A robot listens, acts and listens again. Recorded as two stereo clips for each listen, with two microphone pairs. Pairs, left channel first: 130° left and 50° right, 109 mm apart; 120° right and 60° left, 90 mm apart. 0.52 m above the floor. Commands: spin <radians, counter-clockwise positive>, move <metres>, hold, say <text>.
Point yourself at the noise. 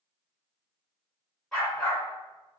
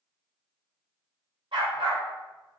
spin 0.87
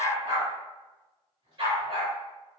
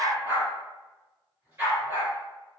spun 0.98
spin -0.17
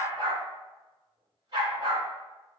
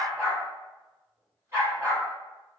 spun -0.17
say Facing the dog barking, over 4 m away.